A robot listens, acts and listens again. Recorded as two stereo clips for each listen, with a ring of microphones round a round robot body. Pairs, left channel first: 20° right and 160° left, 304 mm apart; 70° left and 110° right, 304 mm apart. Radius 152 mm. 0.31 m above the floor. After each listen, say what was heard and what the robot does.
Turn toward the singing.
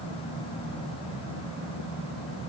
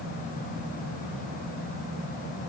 Keep listening.
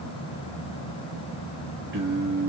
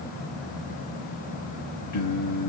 The singing: 100° left. Turn 100° left.
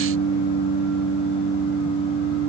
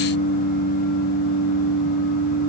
The singing is now 25° left. Turn 25° left.
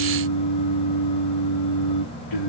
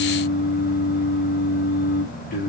Found it: singing, straight ahead.